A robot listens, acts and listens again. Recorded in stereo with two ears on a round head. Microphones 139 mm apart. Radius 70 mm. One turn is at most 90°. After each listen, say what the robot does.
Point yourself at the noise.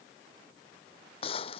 Turn 35° left.
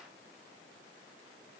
Keep listening.
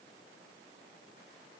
I heard a gunshot, but can't make it out now. It was about straight ahead or 110° left.